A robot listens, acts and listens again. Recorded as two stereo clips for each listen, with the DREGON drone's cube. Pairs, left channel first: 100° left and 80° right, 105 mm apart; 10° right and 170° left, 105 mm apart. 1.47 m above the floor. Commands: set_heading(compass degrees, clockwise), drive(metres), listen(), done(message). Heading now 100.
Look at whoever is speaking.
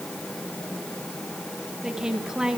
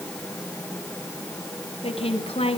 done("Facing the woman speaking, 2 to 4 m away.")